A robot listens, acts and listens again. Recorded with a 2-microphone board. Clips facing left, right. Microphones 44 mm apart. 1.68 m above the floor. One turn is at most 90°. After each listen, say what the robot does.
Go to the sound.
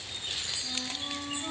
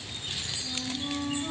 Turn 30° left.
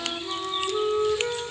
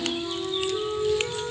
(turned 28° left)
Turn 90° left.
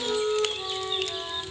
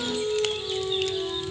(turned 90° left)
Turn 50° left.
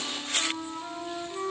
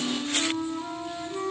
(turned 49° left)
Drive 1.0 m forward.
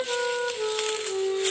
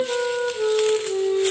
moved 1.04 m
Drive 1.0 m forward.
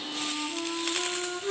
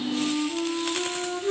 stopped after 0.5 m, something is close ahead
Arrived at the flute, straight ahead.